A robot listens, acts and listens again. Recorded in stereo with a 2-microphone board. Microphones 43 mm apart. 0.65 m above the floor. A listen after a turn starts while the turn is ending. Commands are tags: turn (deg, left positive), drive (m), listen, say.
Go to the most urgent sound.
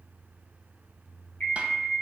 <turn deg="30"/>
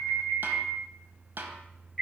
<drive m="1.0"/>
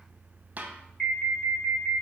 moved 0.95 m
<drive m="1.0"/>
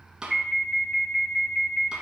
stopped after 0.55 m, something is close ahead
<say>I am next to the alarm.</say>